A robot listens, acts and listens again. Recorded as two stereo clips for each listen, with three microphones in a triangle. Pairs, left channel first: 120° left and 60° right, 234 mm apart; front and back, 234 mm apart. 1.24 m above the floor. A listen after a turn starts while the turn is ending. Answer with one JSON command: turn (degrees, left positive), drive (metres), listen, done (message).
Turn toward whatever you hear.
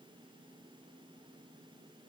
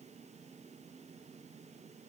{"listen": true}
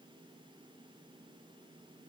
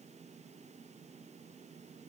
{"listen": true}
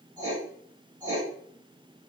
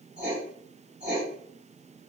{"turn": -135}
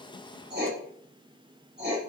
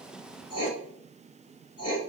{"turn": -10}
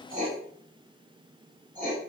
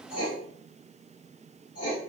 {"done": "Facing the writing, 1 to 2 m away."}